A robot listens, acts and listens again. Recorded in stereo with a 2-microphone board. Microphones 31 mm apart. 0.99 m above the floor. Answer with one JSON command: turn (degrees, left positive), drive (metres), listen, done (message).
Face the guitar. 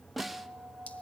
{"turn": -50}
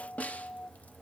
{"done": "Found it: a guitar, straight ahead."}